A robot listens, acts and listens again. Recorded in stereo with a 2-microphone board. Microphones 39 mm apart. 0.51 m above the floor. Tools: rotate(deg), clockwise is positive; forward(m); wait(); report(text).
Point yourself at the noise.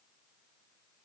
wait()
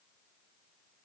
wait()
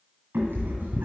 rotate(60)
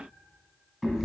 report("Found it: a cat meowing, straight ahead.")